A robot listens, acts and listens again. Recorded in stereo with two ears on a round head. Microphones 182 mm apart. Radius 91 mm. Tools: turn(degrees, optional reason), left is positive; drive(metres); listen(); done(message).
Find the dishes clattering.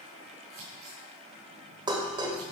turn(degrees=-25, reason="The dishes clattering: about 25° right or 155° right.")
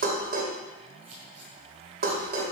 turn(degrees=-130, reason="So it is at 130° right.")
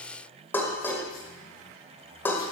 turn(degrees=10, reason="The dishes clattering is now 10° left.")
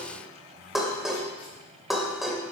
done("Found it: dishes clattering, straight ahead, 2 to 4 m away.")